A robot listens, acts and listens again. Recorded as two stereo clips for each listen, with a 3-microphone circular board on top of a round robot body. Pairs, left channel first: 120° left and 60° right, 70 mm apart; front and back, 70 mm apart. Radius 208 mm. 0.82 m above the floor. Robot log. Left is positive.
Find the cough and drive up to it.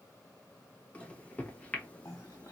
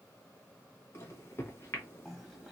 note: The cough: 85° left.
cmd yaw +85
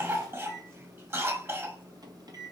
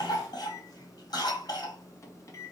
note: The cough is now 10° right.
cmd yaw -10
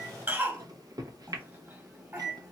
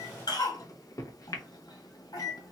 cmd fwd 1.0
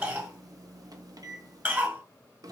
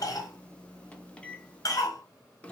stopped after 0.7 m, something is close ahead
end: I am next to the cough.